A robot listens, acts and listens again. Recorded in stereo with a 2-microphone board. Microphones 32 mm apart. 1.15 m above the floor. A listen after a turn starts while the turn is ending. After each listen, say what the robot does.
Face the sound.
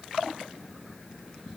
Keep listening.
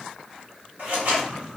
Turn 60° right.
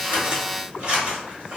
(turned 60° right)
Turn 40° right.
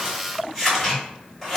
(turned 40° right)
Found it: scissors, straight ahead, 1 to 2 m away.